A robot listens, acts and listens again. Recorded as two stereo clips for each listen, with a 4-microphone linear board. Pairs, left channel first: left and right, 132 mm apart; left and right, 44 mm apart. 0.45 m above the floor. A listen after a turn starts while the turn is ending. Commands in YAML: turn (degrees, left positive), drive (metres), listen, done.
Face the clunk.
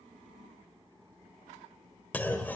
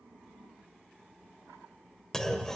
turn: 30
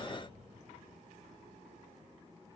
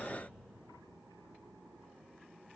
listen: true
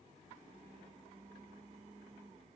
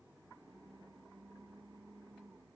done: "I heard a clunk, but can't make it out now. It was about 15° right or 135° left."